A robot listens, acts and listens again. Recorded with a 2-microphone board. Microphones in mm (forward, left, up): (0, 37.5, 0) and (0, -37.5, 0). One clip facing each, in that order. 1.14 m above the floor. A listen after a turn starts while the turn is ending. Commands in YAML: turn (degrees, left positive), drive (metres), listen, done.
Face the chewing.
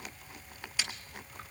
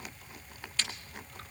turn: 30
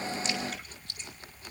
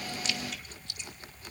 listen: true
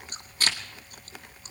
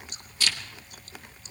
turn: 140
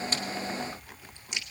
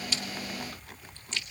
turn: 15
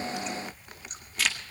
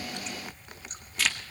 done: "Found it: chewing, straight ahead, 1 to 2 m away."